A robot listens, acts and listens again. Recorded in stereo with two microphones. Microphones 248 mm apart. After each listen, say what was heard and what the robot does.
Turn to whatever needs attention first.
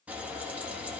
Keep listening.
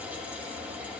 Keep listening.
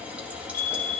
The fire alarm: about 40° left or 140° left. Turn 40° left.
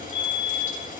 So it is at 95° left. Turn 95° left.
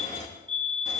The fire alarm is now 20° right. Turn 20° right.
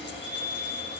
Found it: a fire alarm, straight ahead, 2 to 4 m away.